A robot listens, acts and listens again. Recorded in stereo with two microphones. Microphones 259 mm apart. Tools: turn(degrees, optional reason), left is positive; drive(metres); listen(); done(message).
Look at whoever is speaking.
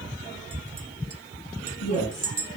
turn(degrees=90)
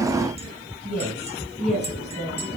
done("Facing the woman speaking.")